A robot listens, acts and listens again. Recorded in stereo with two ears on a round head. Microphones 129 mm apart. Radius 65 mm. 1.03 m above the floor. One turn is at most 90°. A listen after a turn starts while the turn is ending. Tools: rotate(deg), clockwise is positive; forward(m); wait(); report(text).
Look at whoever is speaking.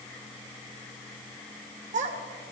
rotate(50)
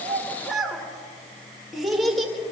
report("Found it: a child speaking, straight ahead.")